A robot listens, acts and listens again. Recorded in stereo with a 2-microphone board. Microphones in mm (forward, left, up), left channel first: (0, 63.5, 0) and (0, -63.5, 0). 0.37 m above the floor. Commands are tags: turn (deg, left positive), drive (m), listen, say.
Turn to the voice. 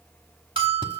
<listen/>
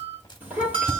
<turn deg="-30"/>
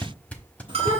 <turn deg="-135"/>
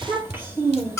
<turn deg="-15"/>
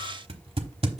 <listen/>
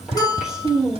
<say>Facing the child speaking.</say>